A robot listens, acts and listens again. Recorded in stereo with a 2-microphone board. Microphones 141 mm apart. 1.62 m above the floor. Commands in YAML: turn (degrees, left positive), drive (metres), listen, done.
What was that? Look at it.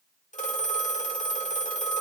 turn: 60
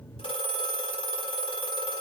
turn: 45
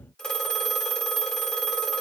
done: "Found it: a phone ringing, straight ahead."